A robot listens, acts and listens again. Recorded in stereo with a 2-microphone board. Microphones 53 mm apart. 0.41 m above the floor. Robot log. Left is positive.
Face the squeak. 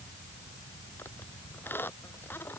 note: The squeak: about 45° left or 135° left.
cmd yaw +45
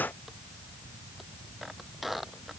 end: Facing the squeak.